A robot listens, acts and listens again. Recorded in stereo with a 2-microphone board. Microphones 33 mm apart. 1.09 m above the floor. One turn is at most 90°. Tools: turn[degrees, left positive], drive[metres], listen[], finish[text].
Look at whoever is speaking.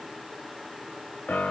Action: listen[]
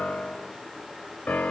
Action: listen[]
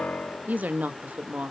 Thought: The woman speaking: about 60° right or 120° right.
Action: turn[-60]
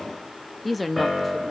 Action: finish[Found it: a woman speaking, straight ahead.]